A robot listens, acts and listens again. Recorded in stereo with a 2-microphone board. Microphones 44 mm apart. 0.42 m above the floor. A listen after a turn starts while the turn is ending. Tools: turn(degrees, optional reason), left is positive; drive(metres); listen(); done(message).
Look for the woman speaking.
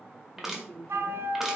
turn(degrees=30, reason="The woman speaking: about 30° left or 150° left.")
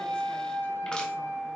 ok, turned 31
listen()
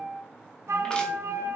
listen()
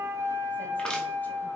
done("I heard a woman speaking, but can't make it out now. It was about straight ahead or 120° left.")